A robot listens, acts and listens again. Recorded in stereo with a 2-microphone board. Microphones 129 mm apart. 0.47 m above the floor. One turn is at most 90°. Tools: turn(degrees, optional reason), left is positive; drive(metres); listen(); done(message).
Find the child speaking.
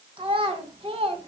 turn(degrees=-45, reason="The child speaking: about 45° right or 135° right.")
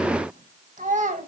turn(degrees=-75, reason="So it is at 75° right.")
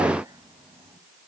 listen()
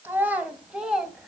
done("Facing the child speaking.")